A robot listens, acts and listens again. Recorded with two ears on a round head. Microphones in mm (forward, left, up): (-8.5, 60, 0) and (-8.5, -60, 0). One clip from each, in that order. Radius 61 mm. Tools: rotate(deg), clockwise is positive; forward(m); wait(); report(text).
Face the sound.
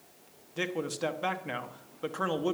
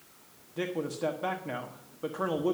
rotate(-40)
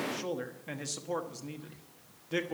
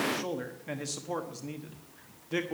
report("Facing the man speaking.")